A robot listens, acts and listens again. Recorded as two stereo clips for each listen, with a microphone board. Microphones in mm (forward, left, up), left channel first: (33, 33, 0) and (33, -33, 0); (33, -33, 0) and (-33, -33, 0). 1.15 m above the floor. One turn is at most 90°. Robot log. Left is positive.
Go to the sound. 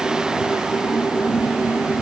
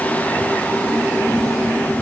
cmd idle
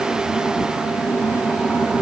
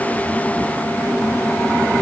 cmd idle
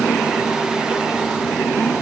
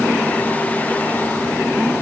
end: I can't make out anything to turn to.